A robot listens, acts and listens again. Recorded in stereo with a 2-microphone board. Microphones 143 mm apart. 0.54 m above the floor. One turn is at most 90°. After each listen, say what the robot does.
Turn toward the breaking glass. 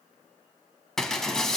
Turn 30° left.
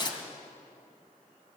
Turn 90° left.
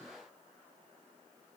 Turn 55° left.
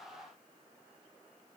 I heard breaking glass from this way, but can't make it out now.